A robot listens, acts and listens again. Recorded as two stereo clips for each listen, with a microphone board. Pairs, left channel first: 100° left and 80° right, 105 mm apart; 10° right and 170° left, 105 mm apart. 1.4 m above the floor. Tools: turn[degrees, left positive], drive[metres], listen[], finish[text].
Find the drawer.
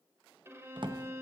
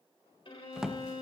Thought: The drawer: 105° right.
Action: turn[-105]
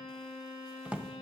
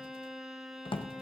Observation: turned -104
Action: finish[Found it: a drawer, straight ahead, under 1 m away.]